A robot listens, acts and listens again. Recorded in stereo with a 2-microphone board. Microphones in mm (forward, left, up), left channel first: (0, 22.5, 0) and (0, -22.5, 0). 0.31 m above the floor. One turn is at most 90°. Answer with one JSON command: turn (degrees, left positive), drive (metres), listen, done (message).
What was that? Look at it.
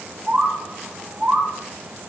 {"turn": -25}
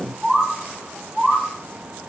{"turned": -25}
{"done": "Facing the bird, 2 to 4 m away."}